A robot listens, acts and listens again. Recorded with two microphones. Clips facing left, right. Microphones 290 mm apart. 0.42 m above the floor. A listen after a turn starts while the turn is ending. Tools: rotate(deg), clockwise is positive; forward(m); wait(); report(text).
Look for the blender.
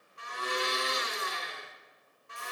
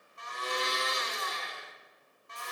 rotate(-35)
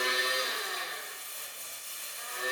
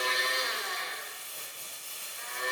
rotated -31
report("Facing the blender.")